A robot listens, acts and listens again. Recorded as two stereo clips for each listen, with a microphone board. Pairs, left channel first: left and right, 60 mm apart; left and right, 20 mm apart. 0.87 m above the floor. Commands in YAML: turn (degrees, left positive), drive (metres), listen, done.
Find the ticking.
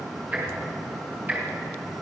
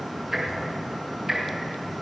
turn: -30
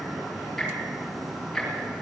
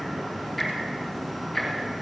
done: "Found it: ticking, straight ahead."